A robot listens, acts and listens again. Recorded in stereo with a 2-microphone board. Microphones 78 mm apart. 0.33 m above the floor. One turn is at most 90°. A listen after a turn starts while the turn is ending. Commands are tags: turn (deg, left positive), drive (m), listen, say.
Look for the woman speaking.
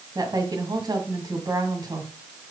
<turn deg="-65"/>
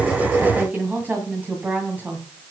<turn deg="-25"/>
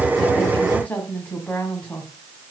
<turn deg="25"/>
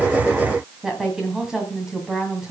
<turn deg="-10"/>
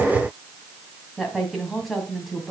<say>Found it: a woman speaking, straight ahead, 2 to 4 m away.</say>